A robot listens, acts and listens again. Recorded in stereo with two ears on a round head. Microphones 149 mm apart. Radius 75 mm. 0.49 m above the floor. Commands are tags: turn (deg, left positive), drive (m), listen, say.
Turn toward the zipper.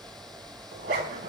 <turn deg="-65"/>
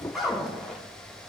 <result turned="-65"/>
<say>Found it: a zipper, straight ahead.</say>